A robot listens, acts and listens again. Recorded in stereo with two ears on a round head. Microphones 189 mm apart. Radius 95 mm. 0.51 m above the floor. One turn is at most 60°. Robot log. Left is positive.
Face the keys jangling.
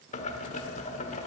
cmd idle
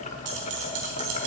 cmd yaw -60
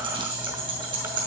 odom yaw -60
note: So it is at 25° right.
cmd yaw -25
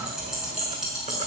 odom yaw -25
end: Facing the keys jangling, over 4 m away.